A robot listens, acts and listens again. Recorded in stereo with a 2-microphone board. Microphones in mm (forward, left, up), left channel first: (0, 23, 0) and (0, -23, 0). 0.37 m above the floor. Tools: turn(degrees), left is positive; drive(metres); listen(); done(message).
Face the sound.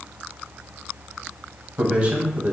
turn(degrees=-25)
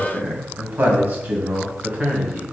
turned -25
turn(degrees=-35)
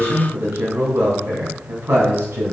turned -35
turn(degrees=-120)
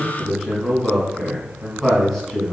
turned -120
done("Facing the man speaking, 2 to 4 m away.")